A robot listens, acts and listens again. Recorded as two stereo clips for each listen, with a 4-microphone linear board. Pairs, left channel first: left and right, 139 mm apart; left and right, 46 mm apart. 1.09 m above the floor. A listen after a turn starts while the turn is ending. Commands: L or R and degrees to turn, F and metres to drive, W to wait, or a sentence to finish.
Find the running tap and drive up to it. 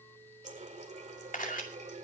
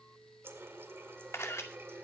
R60
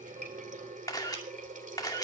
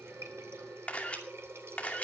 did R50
R75
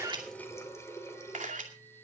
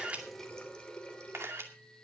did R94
L20
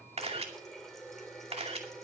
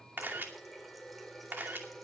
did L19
F1.0
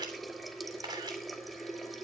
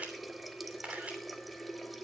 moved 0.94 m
F1.0
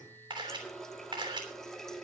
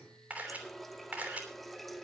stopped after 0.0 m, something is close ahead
Arrived at the running tap, straight ahead.